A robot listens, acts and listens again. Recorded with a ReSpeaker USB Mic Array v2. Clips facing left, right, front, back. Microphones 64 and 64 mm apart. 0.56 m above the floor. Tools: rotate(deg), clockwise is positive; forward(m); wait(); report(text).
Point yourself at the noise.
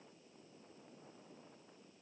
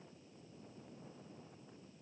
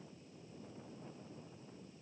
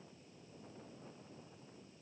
wait()
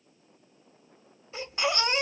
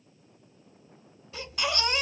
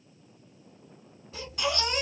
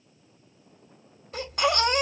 rotate(-150)
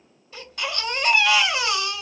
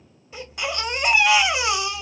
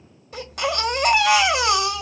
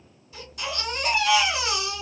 rotate(20)
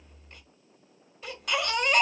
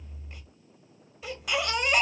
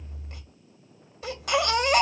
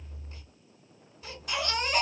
report("Facing the baby crying.")